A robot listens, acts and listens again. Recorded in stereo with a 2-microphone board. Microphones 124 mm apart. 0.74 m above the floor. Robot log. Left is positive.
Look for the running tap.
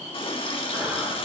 note: The running tap: about 45° left or 135° left.
cmd yaw +45
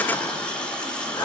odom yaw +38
note: So it is at 10° left.
cmd yaw +10
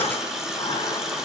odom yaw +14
end: Facing the running tap, 1 to 2 m away.